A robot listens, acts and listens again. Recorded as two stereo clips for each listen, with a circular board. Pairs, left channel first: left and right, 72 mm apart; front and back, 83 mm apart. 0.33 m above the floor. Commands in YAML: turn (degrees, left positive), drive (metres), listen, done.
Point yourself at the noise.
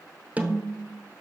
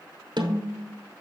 turn: -160
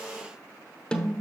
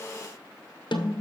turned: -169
turn: 10
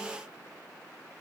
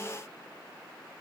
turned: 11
listen: true
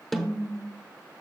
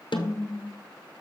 done: "Facing the snare drum, under 1 m away."